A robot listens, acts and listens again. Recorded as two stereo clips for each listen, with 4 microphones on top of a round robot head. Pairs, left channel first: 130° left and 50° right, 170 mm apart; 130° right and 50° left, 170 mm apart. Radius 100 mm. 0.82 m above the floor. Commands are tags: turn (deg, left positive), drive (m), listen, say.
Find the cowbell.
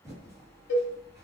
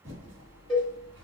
<turn deg="135"/>
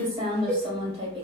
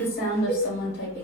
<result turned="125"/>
<turn deg="10"/>
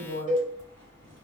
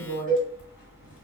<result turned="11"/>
<say>Found it: a cowbell, straight ahead.</say>